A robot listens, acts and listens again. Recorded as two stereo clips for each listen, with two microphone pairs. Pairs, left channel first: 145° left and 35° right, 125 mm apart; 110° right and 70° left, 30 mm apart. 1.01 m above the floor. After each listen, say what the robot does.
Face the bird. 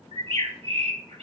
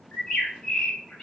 Turn 60° right.
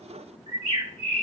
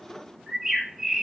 Found it: a bird, straight ahead.